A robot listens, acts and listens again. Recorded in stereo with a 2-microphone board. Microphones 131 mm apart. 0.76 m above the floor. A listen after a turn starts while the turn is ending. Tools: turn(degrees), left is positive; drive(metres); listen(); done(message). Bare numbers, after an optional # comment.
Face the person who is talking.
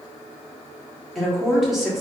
turn(30)
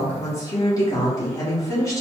# So it is at 155° left.
turn(155)
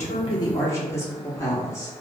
# The woman speaking is now 25° left.
turn(25)
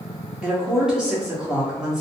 done("Facing the woman speaking, 1 to 2 m away.")